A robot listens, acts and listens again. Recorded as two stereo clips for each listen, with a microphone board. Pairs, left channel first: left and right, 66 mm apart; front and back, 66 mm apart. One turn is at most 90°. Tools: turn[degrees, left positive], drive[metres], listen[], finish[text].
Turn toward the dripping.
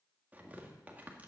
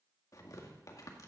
Action: listen[]
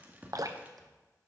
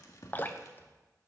Thought: The dripping: 60° right.
Action: turn[-60]
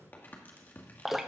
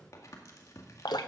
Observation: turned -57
Action: finish[Facing the dripping.]